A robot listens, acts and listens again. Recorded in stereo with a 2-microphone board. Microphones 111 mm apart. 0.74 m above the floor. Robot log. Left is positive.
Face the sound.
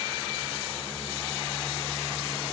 cmd idle
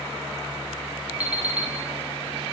cmd yaw -30
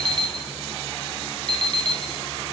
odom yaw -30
note: So it is at 135° right.
cmd yaw -135
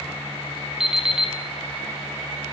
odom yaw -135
end: Facing the alarm clock.